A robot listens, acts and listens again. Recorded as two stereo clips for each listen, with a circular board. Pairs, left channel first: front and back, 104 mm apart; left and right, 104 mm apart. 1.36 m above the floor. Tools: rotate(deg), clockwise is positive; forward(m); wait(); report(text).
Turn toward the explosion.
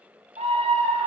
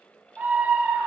wait()
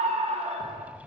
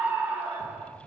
rotate(85)
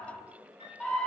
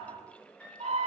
report("Facing where the explosion came from. I can't hear it now.")